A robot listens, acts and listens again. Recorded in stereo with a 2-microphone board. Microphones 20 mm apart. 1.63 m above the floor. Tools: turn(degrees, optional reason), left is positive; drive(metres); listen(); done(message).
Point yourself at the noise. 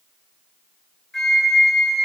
turn(degrees=30)
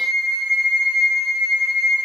turn(degrees=-15, reason="So it is at 15° right.")
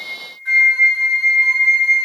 done("Found it: a flute, straight ahead, 1 to 2 m away.")